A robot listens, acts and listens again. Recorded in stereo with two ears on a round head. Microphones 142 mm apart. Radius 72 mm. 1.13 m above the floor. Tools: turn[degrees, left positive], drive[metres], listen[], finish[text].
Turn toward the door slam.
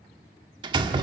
Thought: The door slam: about 35° right or 145° right.
Action: turn[-35]
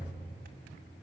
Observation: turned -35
Action: listen[]
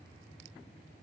Action: finish[I heard a door slam, but can't make it out now. It was about straight ahead or 110° right.]